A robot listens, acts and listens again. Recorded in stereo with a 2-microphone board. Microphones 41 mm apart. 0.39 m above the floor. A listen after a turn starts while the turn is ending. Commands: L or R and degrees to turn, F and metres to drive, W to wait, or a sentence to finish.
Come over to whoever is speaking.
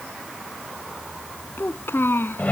L70
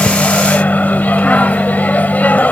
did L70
W
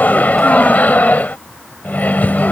W
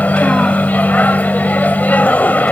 I heard a child speaking, but can't make it out now. It was about straight ahead or 40° left. I did not reach it.